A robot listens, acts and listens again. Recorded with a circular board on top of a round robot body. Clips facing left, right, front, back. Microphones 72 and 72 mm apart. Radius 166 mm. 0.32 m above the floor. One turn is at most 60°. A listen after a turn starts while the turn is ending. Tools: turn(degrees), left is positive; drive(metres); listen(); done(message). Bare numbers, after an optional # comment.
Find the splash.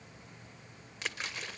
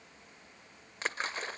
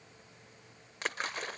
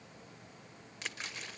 # The splash: 40° right.
turn(-40)
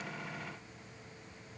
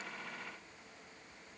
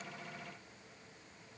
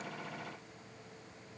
done("Facing where the splash came from. I can't hear it now.")